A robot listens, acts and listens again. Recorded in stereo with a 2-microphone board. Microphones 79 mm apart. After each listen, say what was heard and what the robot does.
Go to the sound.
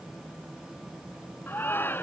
The shout: about 25° left or 155° left. Turn 25° left.
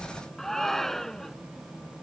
Drive 1.0 m forward.
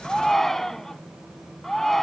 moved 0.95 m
Drive 1.0 m forward.
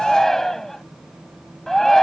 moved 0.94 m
Drive 1.0 m forward.
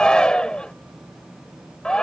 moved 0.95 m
The shout is now 15° left. Turn 15° left.
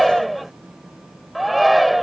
Drive 1.0 m forward.
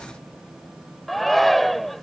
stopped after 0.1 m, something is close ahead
Arrived at the shout, straight ahead.